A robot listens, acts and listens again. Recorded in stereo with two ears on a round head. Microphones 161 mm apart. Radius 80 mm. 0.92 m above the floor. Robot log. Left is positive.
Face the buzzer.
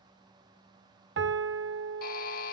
note: The buzzer: about 50° left or 130° left.
cmd yaw +50
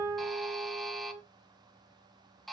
end: Facing the buzzer, 1 to 2 m away.